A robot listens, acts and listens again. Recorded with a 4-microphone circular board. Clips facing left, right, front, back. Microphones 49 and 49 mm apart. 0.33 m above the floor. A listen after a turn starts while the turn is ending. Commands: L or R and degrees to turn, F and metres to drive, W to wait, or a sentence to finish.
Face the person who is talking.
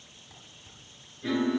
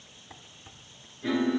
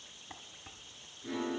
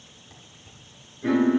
W
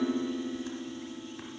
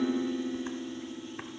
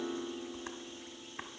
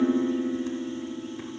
W
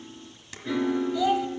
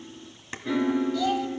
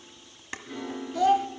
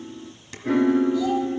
L15
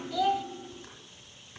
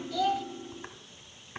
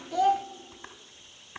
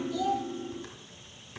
L10
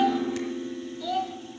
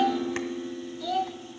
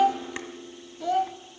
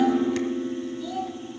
Found it: a child speaking, straight ahead.